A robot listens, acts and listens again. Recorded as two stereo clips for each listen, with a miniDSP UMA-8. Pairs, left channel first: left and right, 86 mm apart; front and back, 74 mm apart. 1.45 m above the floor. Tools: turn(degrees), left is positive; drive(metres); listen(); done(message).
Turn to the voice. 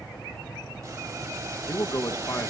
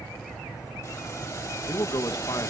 turn(degrees=35)
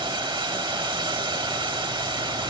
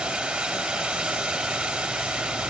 listen()
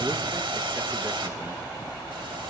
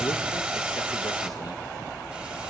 listen()
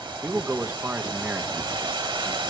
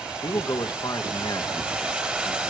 turn(degrees=-25)
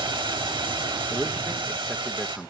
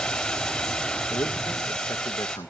done("Found it: a man speaking, straight ahead, 1 to 2 m away.")